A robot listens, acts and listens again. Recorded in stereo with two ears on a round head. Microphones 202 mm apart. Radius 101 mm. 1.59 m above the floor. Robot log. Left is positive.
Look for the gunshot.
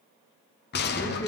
note: The gunshot: about 50° left or 130° left.
cmd yaw +50
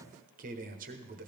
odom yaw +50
cmd idle
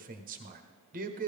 end: I heard a gunshot, but can't make it out now. It was about straight ahead or 80° left.